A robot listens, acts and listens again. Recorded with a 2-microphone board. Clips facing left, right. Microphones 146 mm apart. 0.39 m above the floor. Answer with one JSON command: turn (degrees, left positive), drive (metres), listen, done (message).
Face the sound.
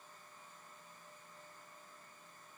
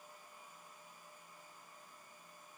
{"listen": true}
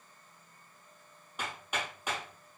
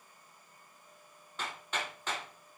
{"turn": 30}
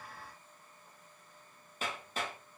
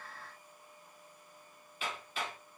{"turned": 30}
{"turn": 140}
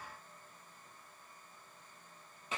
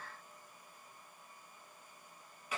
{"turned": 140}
{"turn": 25}
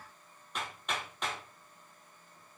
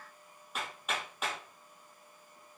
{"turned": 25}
{"done": "Found it: hammering, straight ahead."}